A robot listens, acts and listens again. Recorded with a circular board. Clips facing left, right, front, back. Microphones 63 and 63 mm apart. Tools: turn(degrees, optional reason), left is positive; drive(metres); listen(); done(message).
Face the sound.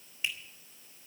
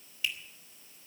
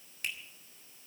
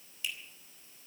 turn(degrees=30, reason="The finger snap: 30° left.")
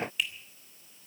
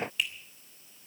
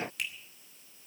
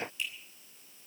done("Facing the finger snap, 2 to 4 m away.")